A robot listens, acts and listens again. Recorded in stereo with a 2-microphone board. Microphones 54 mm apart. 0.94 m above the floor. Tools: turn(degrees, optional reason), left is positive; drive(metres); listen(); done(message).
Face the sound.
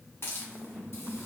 turn(degrees=50, reason="The hiss: about 50° left or 130° left.")
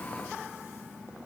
listen()
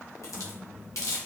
turn(degrees=80, reason="So it is at 80° left.")
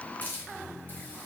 turn(degrees=40, reason="The hiss is now 40° left.")
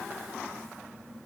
listen()
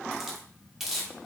done("Found it: a hiss, straight ahead.")